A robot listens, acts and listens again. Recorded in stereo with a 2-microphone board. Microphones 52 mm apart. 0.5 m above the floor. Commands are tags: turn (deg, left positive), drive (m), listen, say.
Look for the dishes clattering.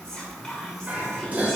<turn deg="-35"/>
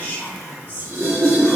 <turn deg="-105"/>
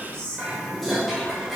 <say>Facing the dishes clattering.</say>